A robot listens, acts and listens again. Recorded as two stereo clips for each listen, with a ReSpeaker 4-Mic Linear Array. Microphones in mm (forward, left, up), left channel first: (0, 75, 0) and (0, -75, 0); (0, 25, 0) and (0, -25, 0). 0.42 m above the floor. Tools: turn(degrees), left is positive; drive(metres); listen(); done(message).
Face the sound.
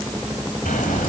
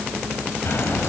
turn(degrees=65)
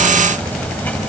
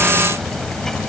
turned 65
turn(degrees=10)
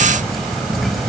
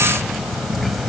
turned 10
done("Found it: ticking, straight ahead, 2 to 4 m away.")